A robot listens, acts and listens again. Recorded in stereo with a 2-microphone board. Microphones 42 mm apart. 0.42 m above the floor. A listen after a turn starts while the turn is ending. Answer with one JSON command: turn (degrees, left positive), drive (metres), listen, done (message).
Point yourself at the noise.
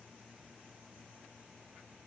{"listen": true}
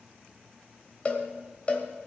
{"turn": 30}
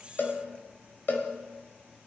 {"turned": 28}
{"turn": 115}
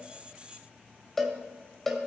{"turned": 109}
{"turn": 10}
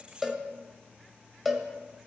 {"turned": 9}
{"done": "Found it: a cowbell, straight ahead."}